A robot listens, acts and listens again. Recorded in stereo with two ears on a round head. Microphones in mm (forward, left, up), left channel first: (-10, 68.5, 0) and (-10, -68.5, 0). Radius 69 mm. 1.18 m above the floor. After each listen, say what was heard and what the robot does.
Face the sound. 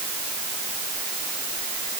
Keep listening.
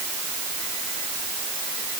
Keep listening.
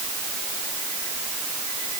I can't make out anything.